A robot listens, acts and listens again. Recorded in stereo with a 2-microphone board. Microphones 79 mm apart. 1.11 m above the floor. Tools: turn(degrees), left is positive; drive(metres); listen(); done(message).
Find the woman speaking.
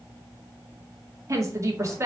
turn(degrees=-35)
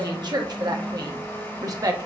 turn(degrees=-135)
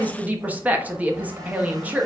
turn(degrees=-20)
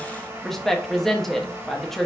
done("Found it: a woman speaking, straight ahead, 1 to 2 m away.")